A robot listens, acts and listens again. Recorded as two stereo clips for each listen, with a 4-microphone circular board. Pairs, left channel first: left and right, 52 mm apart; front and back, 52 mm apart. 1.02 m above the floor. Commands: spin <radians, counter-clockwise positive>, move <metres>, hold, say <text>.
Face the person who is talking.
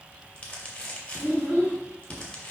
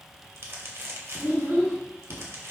spin -2.71
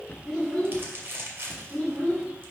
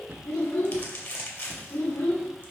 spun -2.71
say Found it: a child speaking, straight ahead, 2 to 4 m away.